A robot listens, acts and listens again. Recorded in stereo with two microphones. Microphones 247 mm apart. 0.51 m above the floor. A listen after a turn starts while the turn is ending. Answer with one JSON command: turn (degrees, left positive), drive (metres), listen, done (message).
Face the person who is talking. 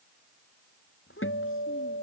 {"turn": 55}
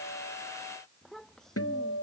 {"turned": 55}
{"done": "Facing the child speaking."}